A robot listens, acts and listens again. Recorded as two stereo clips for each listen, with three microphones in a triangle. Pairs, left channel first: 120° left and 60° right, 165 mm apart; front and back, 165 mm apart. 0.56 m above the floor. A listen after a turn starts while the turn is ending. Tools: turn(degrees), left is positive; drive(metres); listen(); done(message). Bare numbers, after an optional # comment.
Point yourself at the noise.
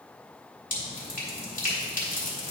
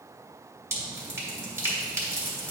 # The dripping: 110° left.
turn(110)
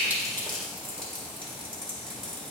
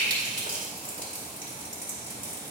done("Found it: dripping, straight ahead.")